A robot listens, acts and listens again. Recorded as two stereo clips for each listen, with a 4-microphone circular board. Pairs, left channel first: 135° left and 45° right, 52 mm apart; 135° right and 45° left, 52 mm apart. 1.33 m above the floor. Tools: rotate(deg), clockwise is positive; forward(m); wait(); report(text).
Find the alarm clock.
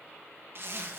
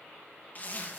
wait()
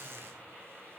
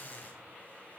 wait()
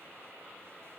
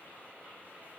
report("I can't make out an alarm clock to turn to.")